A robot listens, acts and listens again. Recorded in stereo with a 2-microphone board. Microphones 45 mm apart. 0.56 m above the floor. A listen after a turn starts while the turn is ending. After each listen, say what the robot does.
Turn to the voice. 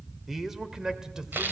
Turn 30° right.
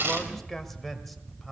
Facing the man speaking.